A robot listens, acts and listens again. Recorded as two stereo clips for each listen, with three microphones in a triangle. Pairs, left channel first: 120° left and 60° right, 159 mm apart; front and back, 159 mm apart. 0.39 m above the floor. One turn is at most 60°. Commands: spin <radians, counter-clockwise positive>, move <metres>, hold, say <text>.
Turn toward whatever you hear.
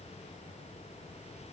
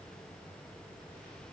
hold
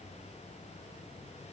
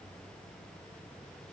hold
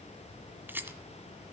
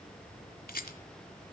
spin 0.35
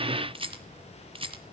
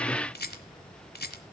say Found it: a rattle, straight ahead.